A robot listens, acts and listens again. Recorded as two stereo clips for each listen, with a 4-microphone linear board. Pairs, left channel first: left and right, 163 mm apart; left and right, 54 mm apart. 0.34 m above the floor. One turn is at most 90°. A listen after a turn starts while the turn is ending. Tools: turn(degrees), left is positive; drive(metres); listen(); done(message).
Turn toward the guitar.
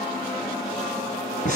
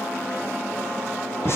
listen()
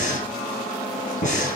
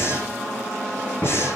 listen()
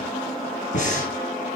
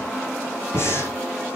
done("I can't make out a guitar, only breathing.")